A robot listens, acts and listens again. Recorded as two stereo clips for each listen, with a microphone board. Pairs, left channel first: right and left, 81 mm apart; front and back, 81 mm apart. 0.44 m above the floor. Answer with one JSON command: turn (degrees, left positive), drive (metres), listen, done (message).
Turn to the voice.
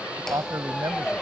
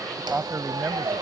{"turn": 125}
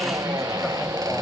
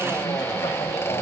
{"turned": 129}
{"listen": true}
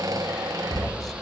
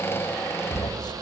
{"listen": true}
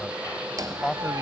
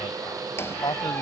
{"done": "Facing the man speaking."}